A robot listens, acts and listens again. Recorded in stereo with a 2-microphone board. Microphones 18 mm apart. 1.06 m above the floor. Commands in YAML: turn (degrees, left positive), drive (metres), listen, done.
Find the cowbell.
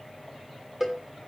turn: -15
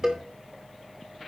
turn: -150
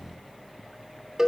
turn: -30
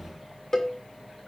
turn: 25
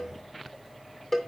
turn: 15
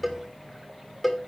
done: "Found it: a cowbell, straight ahead."